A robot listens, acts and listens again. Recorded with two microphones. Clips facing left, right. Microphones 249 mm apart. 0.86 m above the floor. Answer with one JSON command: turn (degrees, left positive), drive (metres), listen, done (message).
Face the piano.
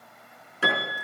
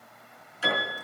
{"turn": 70}
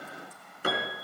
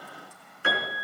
{"turn": 40}
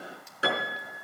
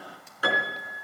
{"turn": 25}
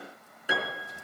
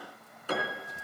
{"turn": 10}
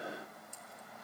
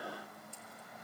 {"listen": true}
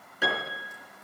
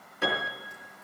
{"done": "Facing the piano, over 4 m away."}